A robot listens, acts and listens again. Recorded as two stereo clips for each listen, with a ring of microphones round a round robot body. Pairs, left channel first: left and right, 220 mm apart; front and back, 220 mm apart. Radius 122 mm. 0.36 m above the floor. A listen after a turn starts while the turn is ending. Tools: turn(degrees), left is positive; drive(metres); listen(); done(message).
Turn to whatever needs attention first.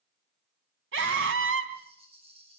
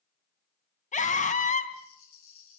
turn(degrees=-55)
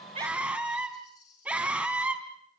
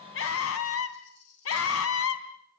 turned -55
done("Facing the scream.")